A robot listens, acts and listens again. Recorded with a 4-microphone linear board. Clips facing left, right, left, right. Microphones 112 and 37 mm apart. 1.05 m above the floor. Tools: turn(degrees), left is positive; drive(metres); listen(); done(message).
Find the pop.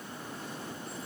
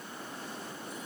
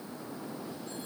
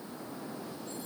listen()
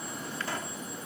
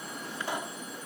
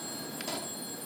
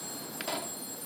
turn(degrees=-20)
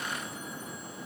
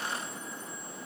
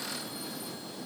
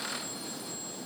listen()
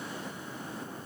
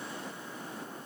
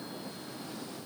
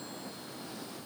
done("I heard a pop, but can't make it out now. It was about straight ahead or 140° right.")